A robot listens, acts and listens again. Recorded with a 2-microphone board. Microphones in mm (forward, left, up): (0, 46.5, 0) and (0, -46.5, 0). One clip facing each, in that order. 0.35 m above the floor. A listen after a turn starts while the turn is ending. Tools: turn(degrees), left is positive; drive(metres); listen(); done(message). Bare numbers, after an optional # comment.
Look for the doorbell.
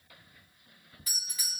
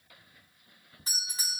# The doorbell: about 30° right or 150° right.
turn(-30)
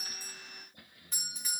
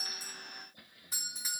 done("Found it: a doorbell, straight ahead.")